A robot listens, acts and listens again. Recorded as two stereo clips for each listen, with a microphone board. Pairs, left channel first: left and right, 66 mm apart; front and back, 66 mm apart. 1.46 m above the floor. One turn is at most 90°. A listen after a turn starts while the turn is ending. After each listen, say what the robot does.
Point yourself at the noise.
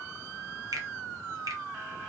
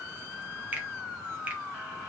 Turn 90° right.
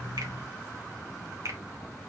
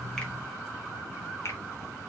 Turn 45° right.
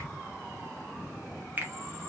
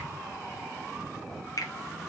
Turn 25° right.
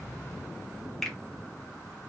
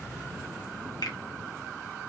Facing the finger snap.